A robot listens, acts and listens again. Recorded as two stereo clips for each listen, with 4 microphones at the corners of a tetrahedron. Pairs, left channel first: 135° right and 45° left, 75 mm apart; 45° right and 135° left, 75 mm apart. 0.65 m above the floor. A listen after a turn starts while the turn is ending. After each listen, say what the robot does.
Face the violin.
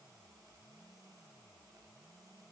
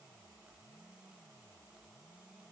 Keep listening.
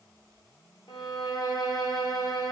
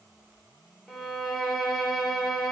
Turn 130° right.
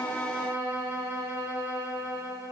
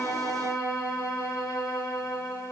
Turn 15° right.
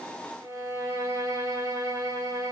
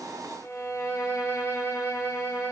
Facing the violin, 1 to 2 m away.